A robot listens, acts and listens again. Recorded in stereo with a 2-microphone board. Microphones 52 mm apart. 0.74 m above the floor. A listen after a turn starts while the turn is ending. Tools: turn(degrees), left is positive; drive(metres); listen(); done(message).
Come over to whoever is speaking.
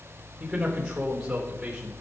turn(degrees=-15)
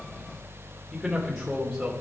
drive(metres=1.0)
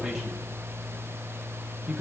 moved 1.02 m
turn(degrees=-10)
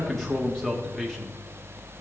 drive(metres=1.0)
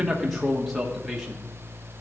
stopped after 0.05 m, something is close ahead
done("Arrived at the man speaking, straight ahead.")